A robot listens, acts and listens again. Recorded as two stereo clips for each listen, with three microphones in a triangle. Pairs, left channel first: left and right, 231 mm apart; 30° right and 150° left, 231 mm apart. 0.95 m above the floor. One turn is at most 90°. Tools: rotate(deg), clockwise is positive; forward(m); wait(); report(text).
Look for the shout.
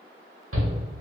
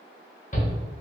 rotate(85)
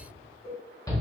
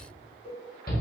rotate(-15)
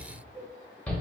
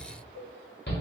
report("Facing the shout, 1 to 2 m away.")